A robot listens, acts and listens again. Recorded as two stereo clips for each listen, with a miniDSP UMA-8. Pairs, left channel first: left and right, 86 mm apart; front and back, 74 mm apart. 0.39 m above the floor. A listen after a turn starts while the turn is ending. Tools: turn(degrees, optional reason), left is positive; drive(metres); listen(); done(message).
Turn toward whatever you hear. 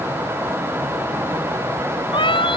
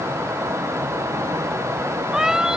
turn(degrees=95, reason="The cat meowing: 95° left.")
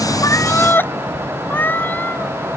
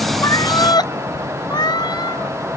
turn(degrees=20, reason="The cat meowing is now 20° left.")
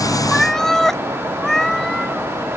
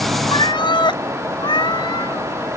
done("Found it: a cat meowing, straight ahead.")